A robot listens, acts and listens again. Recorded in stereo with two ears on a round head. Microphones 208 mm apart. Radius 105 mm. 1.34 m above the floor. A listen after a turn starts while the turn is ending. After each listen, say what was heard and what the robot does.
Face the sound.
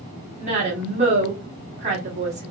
The woman speaking: about 30° right or 150° right. Turn 30° right.
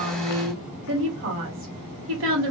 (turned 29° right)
So it is at 120° right. Turn 120° right.
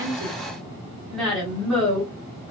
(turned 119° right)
Facing the woman speaking.